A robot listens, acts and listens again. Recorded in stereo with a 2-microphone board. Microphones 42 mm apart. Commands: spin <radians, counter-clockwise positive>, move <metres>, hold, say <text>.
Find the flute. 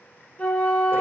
spin 0.61
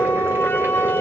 spin 1.83
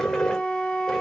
spin 0.44
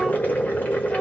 hold
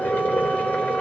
hold
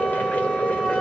say Facing the flute.